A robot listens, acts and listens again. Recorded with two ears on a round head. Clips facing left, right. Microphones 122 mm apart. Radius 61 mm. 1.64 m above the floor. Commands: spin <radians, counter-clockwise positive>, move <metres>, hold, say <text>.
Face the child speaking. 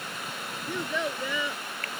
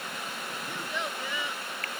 spin 1.57
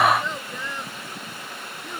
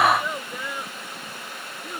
say Facing the child speaking.